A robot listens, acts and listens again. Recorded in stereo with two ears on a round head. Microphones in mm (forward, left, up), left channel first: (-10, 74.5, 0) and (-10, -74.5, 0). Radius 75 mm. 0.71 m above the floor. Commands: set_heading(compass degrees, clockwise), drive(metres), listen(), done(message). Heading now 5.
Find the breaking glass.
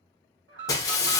set_heading(345)
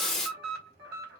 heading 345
done("Facing the breaking glass.")